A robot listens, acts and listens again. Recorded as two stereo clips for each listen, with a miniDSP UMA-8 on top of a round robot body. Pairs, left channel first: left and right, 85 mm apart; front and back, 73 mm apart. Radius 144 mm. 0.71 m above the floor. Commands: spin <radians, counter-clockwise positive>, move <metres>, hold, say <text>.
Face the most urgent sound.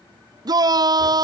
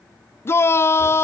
spin -0.96
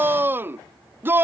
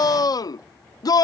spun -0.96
spin -0.44
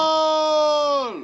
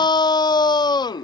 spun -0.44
say Facing the shout.